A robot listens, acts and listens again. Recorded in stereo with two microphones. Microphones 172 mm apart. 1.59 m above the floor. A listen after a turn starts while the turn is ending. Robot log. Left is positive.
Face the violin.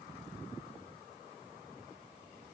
cmd idle
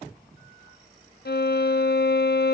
note: The violin: about 70° left or 110° left.
cmd yaw +70
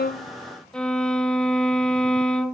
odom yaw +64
end: Found it: a violin, straight ahead.